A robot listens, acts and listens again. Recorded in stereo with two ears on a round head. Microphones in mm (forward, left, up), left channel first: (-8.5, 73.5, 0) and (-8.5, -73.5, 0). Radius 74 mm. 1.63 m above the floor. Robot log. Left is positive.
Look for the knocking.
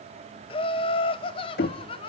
note: The knocking: about 65° left or 115° left.
cmd yaw +65
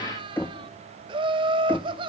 note: So it is at 10° left.
cmd yaw +10
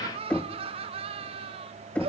end: Facing the knocking, 1 to 2 m away.